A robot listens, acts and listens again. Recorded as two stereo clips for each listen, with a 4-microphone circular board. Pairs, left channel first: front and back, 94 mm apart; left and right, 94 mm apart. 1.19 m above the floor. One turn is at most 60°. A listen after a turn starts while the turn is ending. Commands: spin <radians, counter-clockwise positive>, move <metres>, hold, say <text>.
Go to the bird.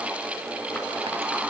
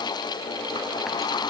hold
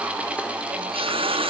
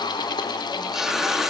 hold
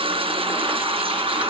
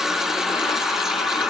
say I can't make out a bird to turn to.